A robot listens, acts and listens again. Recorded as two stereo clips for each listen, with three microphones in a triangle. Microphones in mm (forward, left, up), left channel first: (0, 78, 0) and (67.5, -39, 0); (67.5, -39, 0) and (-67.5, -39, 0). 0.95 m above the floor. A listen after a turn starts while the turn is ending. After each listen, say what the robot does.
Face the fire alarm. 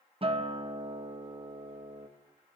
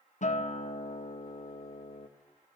Keep listening.
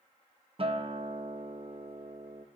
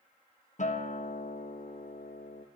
Keep listening.
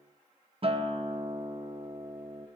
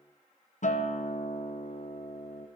I can't make out a fire alarm, only a guitar.